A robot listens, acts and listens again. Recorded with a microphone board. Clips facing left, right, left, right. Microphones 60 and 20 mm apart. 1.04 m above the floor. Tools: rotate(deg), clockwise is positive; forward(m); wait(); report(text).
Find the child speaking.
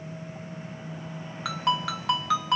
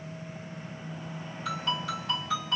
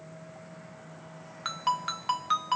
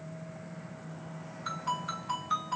wait()
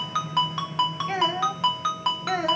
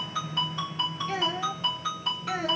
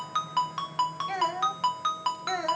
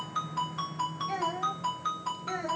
rotate(-55)
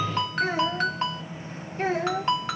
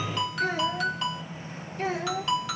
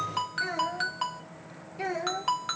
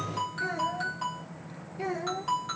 rotate(-30)
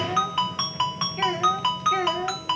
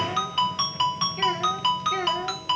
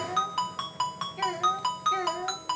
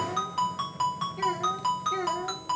rotate(-10)
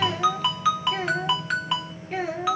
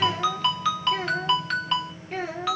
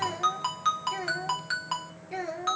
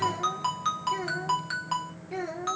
report("Found it: a child speaking, straight ahead, 1 to 2 m away.")